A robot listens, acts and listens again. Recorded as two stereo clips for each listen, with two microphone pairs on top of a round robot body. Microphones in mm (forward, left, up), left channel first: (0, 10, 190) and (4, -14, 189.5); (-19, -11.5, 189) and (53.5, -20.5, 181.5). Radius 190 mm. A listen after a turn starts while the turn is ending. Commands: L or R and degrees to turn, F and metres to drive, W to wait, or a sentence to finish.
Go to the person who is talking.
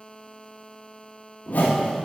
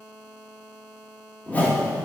W
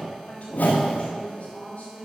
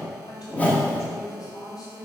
L135
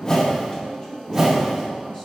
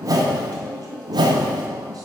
L30
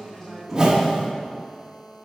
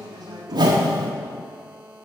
L15
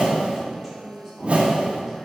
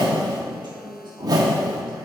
F1.0
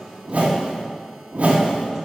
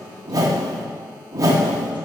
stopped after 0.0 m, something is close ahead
W
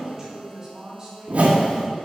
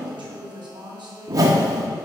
R10
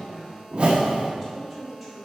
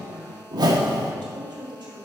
Something is in my way. I am facing the woman speaking but have not reached it.